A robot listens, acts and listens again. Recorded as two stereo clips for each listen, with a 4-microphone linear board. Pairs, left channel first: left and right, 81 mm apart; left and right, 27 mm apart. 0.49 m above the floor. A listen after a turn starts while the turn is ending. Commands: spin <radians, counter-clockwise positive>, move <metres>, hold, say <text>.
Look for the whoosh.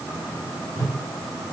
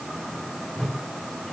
spin 0.70
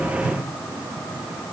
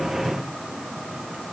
hold
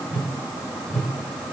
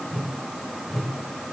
spin 0.17
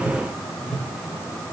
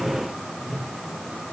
say Facing the whoosh.